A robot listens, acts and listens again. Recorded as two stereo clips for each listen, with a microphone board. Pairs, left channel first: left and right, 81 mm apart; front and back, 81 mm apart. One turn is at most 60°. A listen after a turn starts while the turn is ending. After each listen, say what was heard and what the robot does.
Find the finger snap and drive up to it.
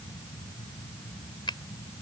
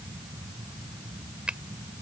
The finger snap: 100° left. Turn 60° left.
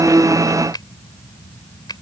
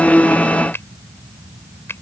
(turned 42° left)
The finger snap is now 60° left. Turn 60° left.
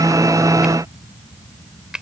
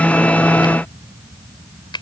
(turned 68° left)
The finger snap is now 10° right. Turn 10° right.
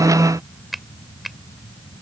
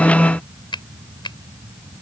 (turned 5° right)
Drive 1.0 m forward.
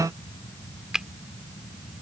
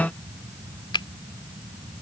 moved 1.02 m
The finger snap is now 10° right. Turn 10° right.
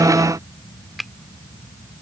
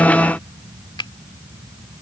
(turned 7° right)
Drive 1.0 m forward.
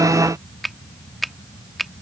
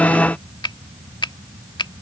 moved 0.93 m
Drive 1.0 m forward.
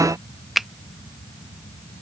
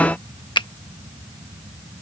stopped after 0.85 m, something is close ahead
Arrived at the finger snap, straight ahead.